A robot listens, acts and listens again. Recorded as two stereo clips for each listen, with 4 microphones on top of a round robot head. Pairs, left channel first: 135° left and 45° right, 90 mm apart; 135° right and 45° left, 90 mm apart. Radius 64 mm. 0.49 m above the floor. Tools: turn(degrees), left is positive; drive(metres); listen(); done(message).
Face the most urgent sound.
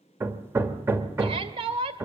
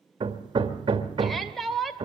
turn(degrees=-45)
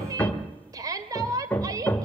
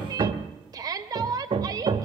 done("Found it: a shout, straight ahead, 1 to 2 m away.")